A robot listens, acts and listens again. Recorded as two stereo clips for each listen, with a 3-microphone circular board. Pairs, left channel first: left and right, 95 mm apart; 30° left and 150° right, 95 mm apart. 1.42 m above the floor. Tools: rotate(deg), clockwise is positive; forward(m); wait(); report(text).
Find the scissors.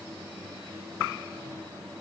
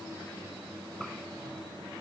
wait()
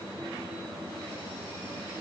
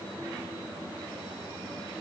wait()
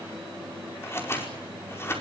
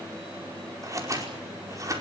rotate(-155)
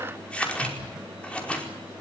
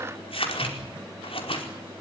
rotate(-10)
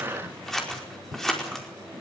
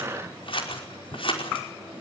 report("Facing the scissors, over 4 m away.")